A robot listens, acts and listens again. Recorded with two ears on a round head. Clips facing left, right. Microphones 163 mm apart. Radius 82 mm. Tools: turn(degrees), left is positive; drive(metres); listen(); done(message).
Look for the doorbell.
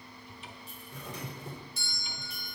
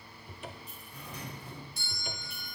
turn(degrees=60)
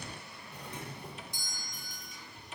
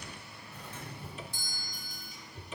turn(degrees=15)
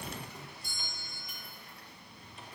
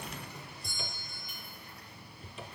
done("Found it: a doorbell, straight ahead, 2 to 4 m away.")